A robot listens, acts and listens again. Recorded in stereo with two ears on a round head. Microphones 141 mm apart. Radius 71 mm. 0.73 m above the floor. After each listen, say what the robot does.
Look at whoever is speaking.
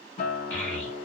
Turn 30° left.
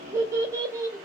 Turn 20° right.
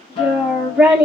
Facing the child speaking.